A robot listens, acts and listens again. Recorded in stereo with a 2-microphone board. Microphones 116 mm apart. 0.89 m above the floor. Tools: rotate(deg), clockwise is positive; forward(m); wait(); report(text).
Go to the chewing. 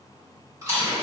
rotate(30)
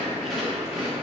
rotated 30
forward(1.0)
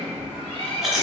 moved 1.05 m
forward(1.0)
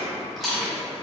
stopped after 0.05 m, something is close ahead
report("Arrived at the chewing, straight ahead.")